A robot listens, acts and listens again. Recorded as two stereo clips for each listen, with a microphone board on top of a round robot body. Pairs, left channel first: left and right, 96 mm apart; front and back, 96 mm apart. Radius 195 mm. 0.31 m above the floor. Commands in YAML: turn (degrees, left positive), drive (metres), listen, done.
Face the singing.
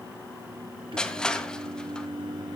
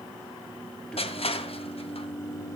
turn: -55
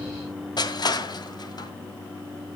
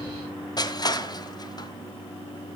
turn: 25
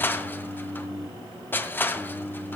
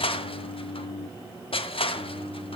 turn: 15
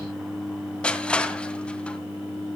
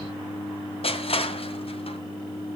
done: "Facing the singing."